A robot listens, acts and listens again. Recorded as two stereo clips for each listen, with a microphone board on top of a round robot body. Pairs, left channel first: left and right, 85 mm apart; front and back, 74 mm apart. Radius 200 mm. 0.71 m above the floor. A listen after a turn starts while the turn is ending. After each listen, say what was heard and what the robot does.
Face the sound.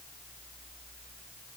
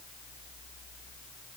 Keep listening.
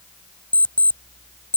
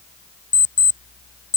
The alarm clock: 15° left. Turn 15° left.
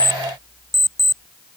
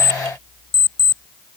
Facing the alarm clock.